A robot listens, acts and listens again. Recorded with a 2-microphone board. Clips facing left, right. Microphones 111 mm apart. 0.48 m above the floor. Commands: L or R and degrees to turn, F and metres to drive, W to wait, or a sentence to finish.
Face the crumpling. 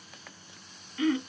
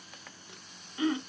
W
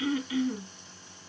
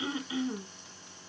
W
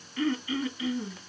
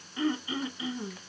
I can't make out crumpling, only throat clearing.